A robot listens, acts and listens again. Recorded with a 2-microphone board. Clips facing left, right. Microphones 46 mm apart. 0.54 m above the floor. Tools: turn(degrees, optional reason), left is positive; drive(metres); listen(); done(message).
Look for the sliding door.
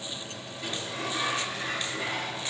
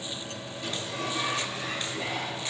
turn(degrees=50, reason="The sliding door: about 50° left or 130° left.")
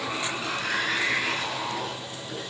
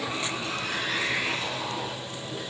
turn(degrees=80, reason="So it is at 80° left.")
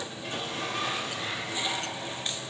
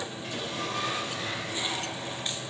done("Facing the sliding door.")